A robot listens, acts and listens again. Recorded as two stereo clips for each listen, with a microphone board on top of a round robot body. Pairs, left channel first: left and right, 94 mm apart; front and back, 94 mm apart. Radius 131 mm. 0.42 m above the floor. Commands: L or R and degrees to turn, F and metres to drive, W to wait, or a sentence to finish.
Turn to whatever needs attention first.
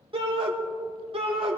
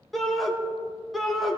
R90
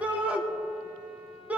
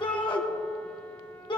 R15
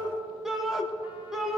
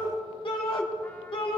Found it: a shout, straight ahead.